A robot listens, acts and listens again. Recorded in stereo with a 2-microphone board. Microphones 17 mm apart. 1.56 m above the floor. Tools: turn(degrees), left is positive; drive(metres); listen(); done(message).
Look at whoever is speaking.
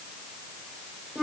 listen()
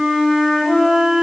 listen()
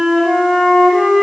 done("I can't make out anyone speaking to turn to.")